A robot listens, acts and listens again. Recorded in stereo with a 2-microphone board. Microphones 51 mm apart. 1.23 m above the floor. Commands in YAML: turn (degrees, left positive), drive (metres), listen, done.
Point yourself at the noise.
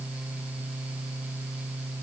listen: true
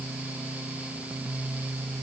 listen: true
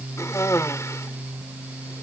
turn: 90
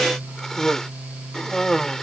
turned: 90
turn: 10
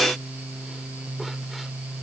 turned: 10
listen: true
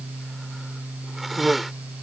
done: "Found it: a cough, straight ahead."